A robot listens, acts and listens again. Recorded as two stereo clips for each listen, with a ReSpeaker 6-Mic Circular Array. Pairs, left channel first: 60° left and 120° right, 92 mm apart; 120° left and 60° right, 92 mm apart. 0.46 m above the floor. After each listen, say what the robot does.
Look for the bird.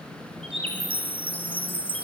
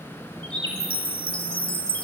Turn 100° right.
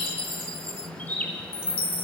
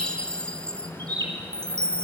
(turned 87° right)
Turn 15° right.
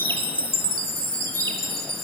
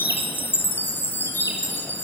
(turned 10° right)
Keep listening.
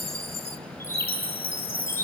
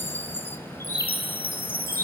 Keep listening.
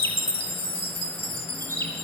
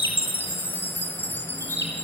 Found it: a bird, straight ahead.